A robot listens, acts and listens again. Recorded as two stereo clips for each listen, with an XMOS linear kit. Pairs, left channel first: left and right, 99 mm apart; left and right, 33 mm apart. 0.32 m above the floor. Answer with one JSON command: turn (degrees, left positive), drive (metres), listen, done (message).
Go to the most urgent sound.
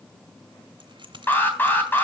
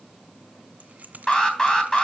{"turn": 20}
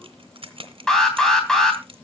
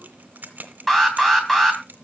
{"drive": 1.0}
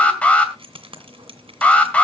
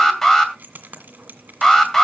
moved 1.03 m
{"turn": 20}
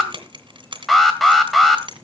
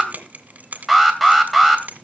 {"drive": 1.0}
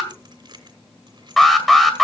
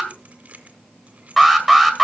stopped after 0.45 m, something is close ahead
{"done": "I am next to the alarm."}